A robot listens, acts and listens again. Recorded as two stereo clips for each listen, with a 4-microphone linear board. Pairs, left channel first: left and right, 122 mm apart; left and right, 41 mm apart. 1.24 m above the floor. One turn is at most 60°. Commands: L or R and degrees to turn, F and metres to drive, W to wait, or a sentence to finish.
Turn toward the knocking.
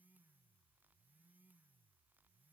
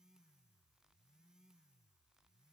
W
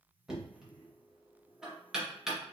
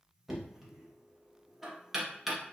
R30
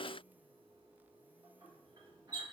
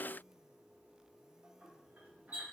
R60
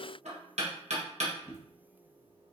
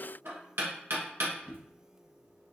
R60
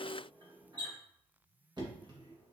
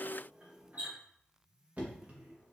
R40
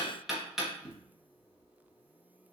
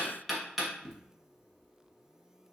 Found it: knocking, straight ahead, 1 to 2 m away.